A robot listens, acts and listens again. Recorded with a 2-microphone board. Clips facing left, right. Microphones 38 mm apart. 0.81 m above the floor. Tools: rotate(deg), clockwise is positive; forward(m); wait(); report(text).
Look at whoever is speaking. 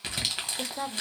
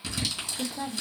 rotate(-65)
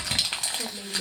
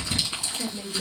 rotate(-15)
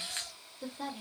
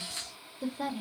report("Facing the woman speaking.")